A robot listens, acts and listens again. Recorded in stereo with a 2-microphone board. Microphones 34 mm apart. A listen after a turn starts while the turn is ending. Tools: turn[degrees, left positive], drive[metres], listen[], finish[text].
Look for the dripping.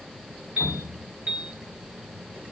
Action: turn[-30]
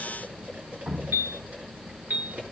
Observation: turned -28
Thought: So it is at 135° right.
Action: turn[-135]
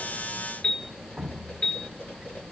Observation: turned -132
Action: finish[Facing the dripping, 1 to 2 m away.]